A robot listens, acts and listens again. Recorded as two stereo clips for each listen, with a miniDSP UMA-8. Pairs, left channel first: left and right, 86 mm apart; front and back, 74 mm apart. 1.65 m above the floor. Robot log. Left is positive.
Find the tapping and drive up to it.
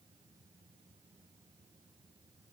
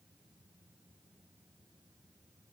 cmd idle
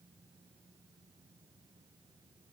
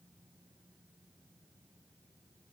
cmd idle
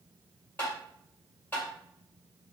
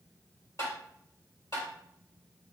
note: The tapping: 25° left.
cmd yaw +25
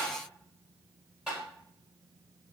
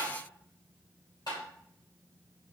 cmd fwd 1.0
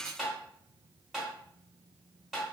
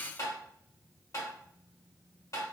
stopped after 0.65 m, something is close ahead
end: Arrived at the tapping, straight ahead.